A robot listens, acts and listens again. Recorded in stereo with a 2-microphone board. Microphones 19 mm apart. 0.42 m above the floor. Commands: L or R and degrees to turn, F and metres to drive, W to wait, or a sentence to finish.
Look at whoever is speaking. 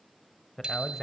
L30
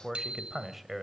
R15
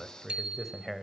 Facing the man speaking.